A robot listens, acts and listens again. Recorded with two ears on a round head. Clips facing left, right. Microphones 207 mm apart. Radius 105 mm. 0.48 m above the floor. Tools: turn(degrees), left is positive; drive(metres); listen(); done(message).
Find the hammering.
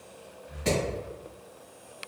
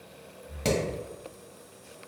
turn(degrees=-75)
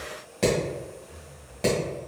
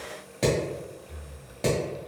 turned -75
done("Facing the hammering, 1 to 2 m away.")